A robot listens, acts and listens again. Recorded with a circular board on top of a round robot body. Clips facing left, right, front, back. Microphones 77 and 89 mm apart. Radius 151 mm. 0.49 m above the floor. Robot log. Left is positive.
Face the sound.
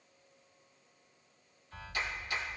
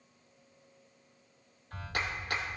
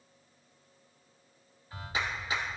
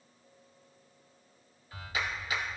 note: The clap: 60° right.
cmd yaw -60
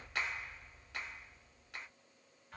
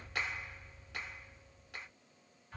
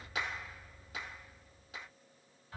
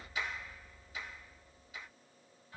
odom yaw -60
end: Found it: a clap, straight ahead, 1 to 2 m away.